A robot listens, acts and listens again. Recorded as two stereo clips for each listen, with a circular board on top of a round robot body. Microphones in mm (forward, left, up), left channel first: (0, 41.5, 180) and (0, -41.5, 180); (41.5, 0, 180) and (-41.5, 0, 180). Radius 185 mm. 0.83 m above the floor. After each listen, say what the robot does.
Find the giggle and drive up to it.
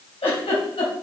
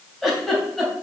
Turn 90° left.
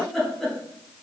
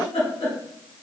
Drive 1.0 m forward.
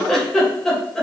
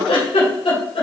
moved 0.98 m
Drive 1.0 m forward.
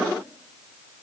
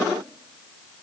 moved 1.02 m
Keep listening.
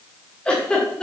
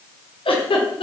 Turn 10° left.
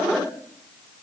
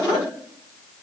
Keep listening.
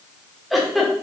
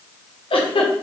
Drive 1.0 m forward.
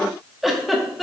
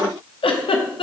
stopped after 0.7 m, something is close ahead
Arrived at the giggle, straight ahead.